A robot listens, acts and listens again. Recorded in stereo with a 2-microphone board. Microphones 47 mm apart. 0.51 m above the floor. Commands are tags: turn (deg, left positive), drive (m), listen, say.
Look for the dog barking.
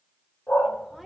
<turn deg="50"/>
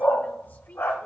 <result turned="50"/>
<turn deg="75"/>
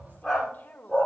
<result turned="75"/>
<say>Found it: a dog barking, straight ahead, over 4 m away.</say>